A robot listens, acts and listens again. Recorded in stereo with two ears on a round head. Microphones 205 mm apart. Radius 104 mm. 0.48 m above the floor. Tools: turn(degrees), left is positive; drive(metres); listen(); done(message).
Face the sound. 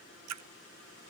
turn(degrees=-90)
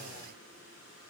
done("I heard a splash from this way, but can't make it out now.")